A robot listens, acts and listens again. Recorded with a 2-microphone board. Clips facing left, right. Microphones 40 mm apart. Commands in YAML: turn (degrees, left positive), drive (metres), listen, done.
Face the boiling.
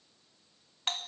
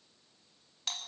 listen: true
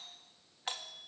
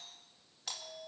listen: true
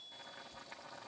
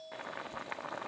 turn: -45
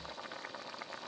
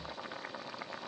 done: "Facing the boiling."